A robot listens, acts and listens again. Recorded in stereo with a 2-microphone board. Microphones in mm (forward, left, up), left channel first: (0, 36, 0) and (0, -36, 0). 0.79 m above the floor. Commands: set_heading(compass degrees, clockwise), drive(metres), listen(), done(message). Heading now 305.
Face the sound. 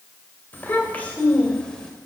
set_heading(275)
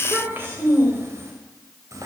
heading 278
set_heading(328)
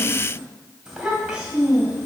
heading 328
set_heading(343)
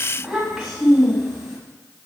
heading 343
done("Found it: a child speaking, straight ahead.")